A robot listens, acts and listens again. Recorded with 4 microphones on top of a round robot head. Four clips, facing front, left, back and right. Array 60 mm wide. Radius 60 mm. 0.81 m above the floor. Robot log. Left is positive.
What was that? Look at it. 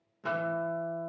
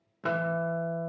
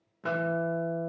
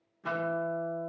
note: The guitar: 105° left.
cmd yaw +105
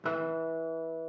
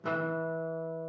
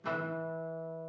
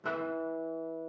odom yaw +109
end: Found it: a guitar, straight ahead.